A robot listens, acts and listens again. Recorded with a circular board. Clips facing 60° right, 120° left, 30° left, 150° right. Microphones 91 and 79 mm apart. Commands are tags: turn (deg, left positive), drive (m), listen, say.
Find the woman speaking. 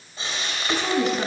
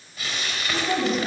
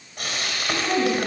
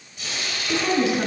<turn deg="-80"/>
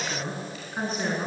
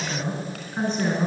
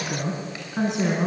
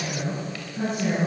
<turn deg="30"/>
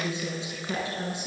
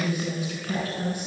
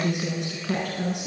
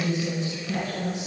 <turn deg="10"/>
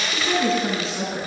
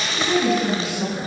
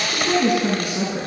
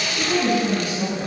<say>Facing the woman speaking.</say>